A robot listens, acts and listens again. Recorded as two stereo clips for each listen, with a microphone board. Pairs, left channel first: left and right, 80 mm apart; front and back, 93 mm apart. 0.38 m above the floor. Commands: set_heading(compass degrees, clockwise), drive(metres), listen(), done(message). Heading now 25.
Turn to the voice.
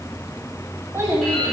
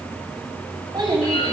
set_heading(165)
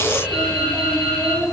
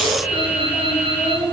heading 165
done("Found it: a child speaking, straight ahead.")